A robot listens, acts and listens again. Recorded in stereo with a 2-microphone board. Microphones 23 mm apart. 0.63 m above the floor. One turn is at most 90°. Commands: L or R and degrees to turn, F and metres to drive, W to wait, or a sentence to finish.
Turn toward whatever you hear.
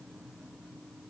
W
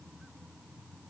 W
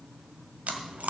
R90
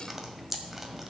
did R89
Facing the chewing, 1 to 2 m away.